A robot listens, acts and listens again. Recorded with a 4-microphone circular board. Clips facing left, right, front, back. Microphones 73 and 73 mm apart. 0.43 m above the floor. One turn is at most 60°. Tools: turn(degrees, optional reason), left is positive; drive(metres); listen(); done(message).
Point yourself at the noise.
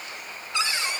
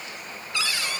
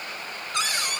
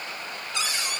turn(degrees=25, reason="The cupboard door: 25° left.")
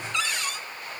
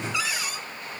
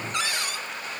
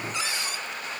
done("Found it: a cupboard door, straight ahead.")